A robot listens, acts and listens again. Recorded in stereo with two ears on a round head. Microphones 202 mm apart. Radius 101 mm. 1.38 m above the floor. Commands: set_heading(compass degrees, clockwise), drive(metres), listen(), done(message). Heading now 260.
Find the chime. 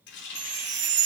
set_heading(310)
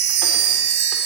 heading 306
set_heading(21)
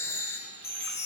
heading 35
set_heading(25)
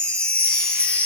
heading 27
done("Found it: a chime, straight ahead, 1 to 2 m away.")